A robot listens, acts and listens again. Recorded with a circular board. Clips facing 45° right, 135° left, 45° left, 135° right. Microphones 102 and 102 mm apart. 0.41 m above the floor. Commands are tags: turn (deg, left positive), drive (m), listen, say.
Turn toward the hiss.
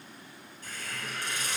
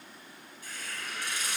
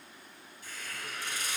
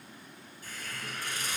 <turn deg="-90"/>
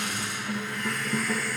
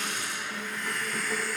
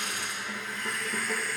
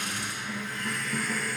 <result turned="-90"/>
<turn deg="-20"/>
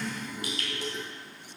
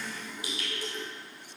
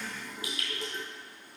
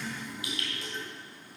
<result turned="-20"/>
<say>Facing the hiss.</say>